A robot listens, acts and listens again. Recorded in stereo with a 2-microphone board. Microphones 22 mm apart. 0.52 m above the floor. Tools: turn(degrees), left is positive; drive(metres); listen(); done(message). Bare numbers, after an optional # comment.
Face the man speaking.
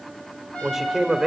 turn(-30)
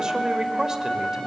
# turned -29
listen()
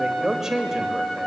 # The man speaking: about 20° right or 160° right.
turn(-20)
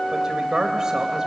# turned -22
# So it is at 150° right.
turn(-150)
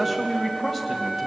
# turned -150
done("Found it: a man speaking, straight ahead.")